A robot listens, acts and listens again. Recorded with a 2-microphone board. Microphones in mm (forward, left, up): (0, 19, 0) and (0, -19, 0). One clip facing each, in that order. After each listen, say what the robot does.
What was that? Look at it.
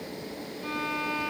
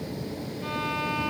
Turn 60° right.
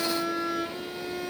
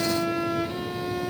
Turn 55° right.
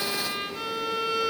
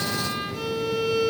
Turn 10° left.
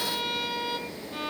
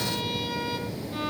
Facing the violin.